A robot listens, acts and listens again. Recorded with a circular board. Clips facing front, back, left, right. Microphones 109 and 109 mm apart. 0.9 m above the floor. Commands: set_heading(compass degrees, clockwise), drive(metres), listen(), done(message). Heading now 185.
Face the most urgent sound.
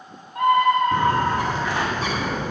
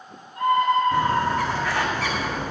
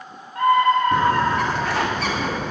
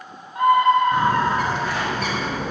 set_heading(200)
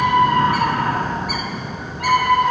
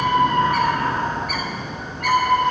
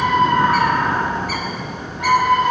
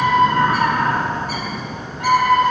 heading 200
done("Found it: a scream, straight ahead.")